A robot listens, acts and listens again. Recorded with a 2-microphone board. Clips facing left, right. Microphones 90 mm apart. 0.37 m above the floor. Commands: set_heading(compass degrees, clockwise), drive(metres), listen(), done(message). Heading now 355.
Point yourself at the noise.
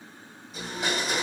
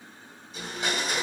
set_heading(325)
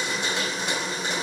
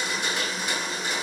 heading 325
set_heading(180)
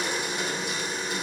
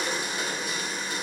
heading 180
set_heading(150)
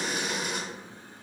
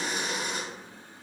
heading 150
done("Found it: a blender, straight ahead.")